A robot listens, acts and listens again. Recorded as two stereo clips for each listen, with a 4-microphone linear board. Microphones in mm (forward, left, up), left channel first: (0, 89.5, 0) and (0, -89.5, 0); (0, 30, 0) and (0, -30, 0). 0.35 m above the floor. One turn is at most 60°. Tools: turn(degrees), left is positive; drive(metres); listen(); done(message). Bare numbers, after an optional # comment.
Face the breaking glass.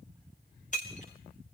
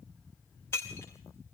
# The breaking glass: about 45° left or 135° left.
turn(45)
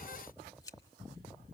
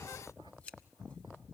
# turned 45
listen()
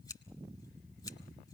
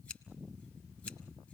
done("I heard breaking glass, but can't make it out now. It was about straight ahead or 90° left.")